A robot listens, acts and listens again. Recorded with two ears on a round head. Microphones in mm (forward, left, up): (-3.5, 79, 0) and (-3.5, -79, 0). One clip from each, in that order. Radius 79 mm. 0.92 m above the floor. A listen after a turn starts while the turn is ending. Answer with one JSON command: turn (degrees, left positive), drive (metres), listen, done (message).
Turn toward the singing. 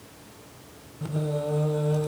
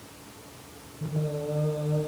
{"turn": 50}
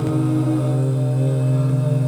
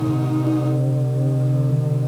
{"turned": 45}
{"turn": 80}
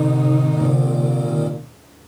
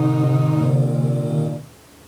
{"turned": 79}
{"turn": 25}
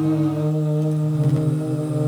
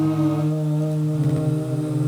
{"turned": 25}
{"done": "Found it: singing, straight ahead, over 4 m away."}